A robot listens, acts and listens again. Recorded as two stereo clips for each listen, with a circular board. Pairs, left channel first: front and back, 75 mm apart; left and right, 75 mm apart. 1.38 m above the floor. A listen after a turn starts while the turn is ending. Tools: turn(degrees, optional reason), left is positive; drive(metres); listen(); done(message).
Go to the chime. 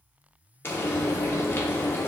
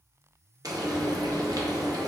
listen()
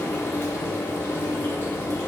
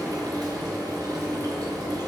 listen()
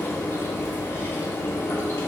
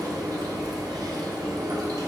done("I can't make out a chime to turn to.")